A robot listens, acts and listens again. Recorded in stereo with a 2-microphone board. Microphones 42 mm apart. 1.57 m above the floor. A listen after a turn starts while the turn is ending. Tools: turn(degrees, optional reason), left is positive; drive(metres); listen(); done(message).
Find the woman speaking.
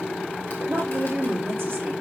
turn(degrees=-90)
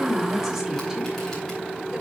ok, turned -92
listen()
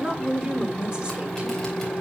turn(degrees=-20, reason="The woman speaking is now 20° right.")
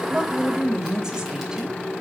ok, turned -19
turn(degrees=-15, reason="The woman speaking is now 15° right.")
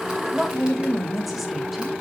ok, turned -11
done("Facing the woman speaking, 1 to 2 m away.")